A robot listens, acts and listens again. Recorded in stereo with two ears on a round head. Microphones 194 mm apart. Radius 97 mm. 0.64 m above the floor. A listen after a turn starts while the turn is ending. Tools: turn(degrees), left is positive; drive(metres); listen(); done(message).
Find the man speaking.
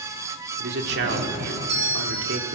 turn(degrees=-55)
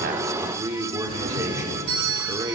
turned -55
turn(degrees=-20)
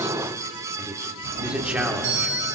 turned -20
done("Found it: a man speaking, straight ahead.")